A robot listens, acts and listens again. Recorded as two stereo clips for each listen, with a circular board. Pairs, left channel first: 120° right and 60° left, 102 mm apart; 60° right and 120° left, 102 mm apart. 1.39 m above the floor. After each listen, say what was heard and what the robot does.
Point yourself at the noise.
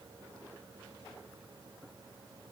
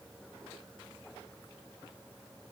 Keep listening.
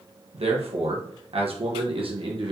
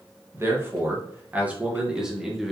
The man speaking: 30° left. Turn 30° left.
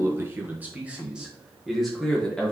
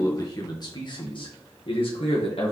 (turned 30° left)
The man speaking is now 40° right. Turn 40° right.
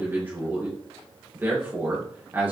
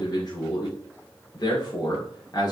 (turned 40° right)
The man speaking is now 10° right. Turn 10° right.
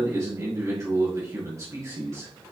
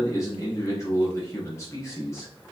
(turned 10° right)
Facing the man speaking, 1 to 2 m away.